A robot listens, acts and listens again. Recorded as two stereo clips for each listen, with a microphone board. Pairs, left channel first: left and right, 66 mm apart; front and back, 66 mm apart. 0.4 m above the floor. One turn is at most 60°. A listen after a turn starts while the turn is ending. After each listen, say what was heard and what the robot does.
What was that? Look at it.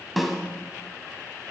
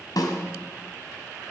Facing the snare drum.